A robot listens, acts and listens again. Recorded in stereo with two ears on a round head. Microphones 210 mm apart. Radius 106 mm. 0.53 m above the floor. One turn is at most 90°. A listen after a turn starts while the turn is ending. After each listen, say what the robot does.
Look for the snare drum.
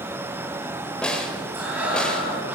Turn 30° left.
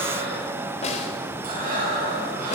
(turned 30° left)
Keep listening.
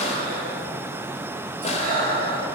Keep listening.
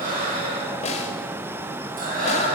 Turn 90° left.
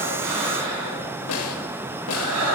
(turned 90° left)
Turn 85° left.
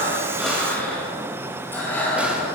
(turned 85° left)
Keep listening.
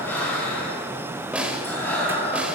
Found it: a snare drum, straight ahead.